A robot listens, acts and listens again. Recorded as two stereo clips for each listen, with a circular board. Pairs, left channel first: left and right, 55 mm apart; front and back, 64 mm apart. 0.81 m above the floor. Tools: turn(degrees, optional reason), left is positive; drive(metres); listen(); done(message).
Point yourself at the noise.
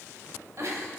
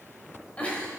turn(degrees=-70, reason="The giggle: 70° right.")
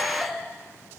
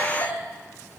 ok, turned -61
turn(degrees=-10, reason="The giggle is now 10° right.")
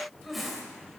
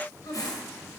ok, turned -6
done("Found it: a giggle, straight ahead, 2 to 4 m away.")